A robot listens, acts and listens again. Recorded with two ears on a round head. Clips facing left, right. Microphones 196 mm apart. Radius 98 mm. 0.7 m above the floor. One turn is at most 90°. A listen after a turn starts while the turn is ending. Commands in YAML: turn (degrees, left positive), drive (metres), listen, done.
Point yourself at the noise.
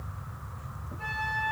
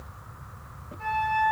turn: 30
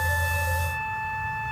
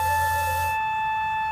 turn: -20
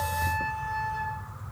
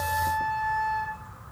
done: "Facing the flute."